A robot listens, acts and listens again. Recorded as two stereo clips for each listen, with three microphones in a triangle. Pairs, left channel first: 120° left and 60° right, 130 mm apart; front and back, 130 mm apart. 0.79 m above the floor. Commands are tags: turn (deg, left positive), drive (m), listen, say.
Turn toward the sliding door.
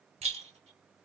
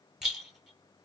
<listen/>
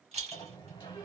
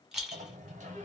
<turn deg="175"/>
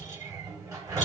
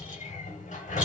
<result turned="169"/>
<turn deg="10"/>
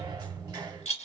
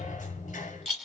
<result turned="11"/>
<say>Found it: a sliding door, straight ahead, 1 to 2 m away.</say>